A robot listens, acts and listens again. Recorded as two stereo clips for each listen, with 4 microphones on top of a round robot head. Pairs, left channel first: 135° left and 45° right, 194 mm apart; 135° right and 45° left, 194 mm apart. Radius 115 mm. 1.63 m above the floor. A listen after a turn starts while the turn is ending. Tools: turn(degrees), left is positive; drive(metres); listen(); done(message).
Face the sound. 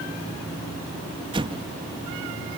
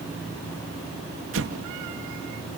turn(degrees=25)
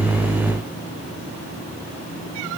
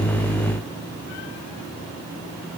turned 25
done("I heard an explosion from this way, but can't make it out now.")